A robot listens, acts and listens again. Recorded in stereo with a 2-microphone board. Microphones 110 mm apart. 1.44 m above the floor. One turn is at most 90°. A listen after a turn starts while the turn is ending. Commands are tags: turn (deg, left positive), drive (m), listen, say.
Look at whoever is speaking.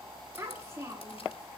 <turn deg="-25"/>
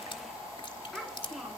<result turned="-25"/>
<say>Found it: a child speaking, straight ahead.</say>